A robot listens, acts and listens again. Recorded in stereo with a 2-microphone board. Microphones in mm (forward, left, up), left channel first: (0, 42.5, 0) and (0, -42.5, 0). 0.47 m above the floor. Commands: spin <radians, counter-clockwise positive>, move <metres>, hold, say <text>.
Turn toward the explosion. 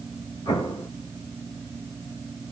spin 1.22
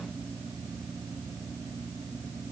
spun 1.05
hold
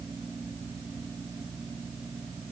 say I heard an explosion, but can't make it out now. It was about 10° left or 50° left.